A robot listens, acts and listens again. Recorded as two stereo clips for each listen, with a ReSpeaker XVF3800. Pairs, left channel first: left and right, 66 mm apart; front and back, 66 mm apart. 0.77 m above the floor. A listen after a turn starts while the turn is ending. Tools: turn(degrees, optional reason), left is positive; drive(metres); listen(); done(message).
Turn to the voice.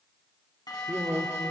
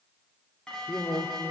turn(degrees=-30, reason="The man speaking: 30° right.")
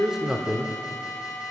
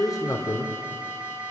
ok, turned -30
done("Facing the man speaking, 2 to 4 m away.")